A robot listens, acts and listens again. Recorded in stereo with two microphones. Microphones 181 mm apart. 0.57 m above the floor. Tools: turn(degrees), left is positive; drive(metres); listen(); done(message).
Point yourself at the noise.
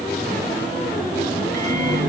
turn(degrees=-65)
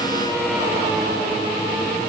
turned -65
listen()
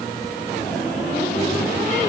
listen()
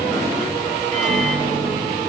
done("Facing the microwave.")